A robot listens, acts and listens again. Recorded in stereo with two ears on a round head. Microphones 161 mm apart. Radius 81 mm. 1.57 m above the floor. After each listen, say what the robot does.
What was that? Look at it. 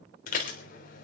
Turn 50° left.
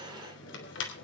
Turn 80° left.
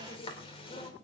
Turn 30° left.
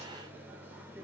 Turn 10° right.
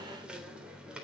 Facing the dishes clattering.